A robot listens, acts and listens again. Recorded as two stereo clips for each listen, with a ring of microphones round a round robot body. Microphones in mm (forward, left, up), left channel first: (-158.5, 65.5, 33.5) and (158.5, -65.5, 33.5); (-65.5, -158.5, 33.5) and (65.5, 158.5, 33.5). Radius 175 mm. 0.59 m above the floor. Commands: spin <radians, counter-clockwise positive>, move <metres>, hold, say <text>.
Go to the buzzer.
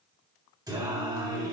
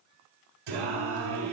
hold
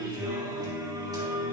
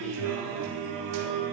hold
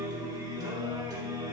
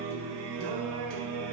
say I can't make out a buzzer to turn to.